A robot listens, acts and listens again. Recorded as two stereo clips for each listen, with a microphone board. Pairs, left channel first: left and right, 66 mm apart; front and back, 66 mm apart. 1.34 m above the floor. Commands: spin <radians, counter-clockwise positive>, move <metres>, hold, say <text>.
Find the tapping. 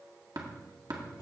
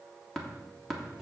spin -1.40
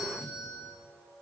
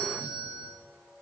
say Found it: tapping, straight ahead, 1 to 2 m away.